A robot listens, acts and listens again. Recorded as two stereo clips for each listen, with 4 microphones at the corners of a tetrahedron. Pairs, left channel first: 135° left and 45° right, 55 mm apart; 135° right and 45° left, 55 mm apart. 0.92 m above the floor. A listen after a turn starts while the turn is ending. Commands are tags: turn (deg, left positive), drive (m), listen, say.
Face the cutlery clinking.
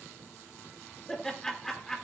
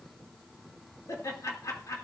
<listen/>
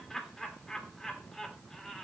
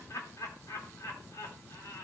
<listen/>
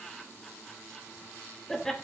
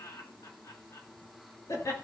<say>I can't make out cutlery clinking, only laughter.</say>